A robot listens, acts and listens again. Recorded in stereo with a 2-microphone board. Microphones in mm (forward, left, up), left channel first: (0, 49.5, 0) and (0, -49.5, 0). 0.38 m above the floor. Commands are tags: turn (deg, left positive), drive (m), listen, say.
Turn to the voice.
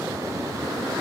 <listen/>
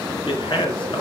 <turn deg="65"/>
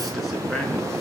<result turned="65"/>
<listen/>
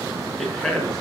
<say>Found it: a man speaking, straight ahead, over 4 m away.</say>